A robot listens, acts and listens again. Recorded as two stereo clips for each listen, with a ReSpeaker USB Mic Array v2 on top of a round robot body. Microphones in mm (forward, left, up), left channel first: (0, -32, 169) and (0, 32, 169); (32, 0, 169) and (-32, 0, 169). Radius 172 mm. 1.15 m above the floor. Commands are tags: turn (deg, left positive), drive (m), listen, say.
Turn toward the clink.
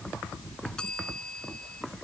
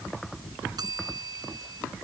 <listen/>
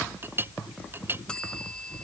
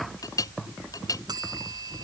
<turn deg="35"/>
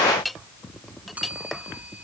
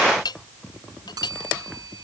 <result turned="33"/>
<say>Found it: a clink, straight ahead.</say>